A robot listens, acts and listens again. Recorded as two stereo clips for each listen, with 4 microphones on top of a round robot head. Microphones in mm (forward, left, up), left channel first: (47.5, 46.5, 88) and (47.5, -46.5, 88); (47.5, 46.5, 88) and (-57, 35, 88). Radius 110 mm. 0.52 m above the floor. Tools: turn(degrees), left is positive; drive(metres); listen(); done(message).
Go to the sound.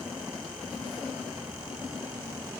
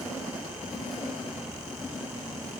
listen()
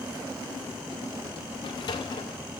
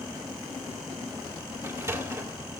turn(degrees=130)
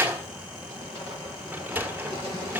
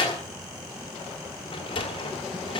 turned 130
turn(degrees=-20)
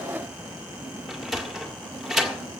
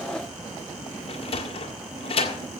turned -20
drive(metres=1.0)
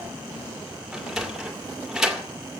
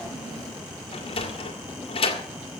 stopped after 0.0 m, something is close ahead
done("Blocked. The sliding door is further on, straight ahead.")